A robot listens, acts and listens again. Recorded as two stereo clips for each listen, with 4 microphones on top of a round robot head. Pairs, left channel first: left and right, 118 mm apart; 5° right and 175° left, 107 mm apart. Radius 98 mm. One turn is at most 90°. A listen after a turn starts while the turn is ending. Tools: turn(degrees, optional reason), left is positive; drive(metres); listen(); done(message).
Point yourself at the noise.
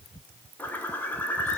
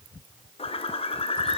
turn(degrees=15, reason="The bird: 15° left.")
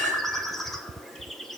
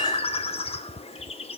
done("Facing the bird.")